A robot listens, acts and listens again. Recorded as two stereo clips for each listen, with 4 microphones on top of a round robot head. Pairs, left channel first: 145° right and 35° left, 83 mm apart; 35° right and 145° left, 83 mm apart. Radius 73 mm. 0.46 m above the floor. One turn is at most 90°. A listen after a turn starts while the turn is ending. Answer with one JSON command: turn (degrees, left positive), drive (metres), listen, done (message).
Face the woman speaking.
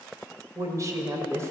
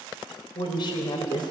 {"turn": -15}
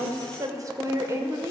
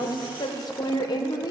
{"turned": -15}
{"turn": -15}
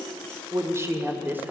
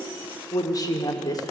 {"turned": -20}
{"turn": -25}
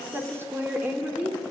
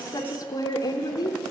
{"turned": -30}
{"turn": -35}
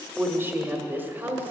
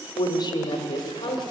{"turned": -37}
{"turn": -20}
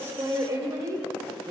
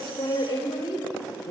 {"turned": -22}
{"done": "Found it: a woman speaking, straight ahead."}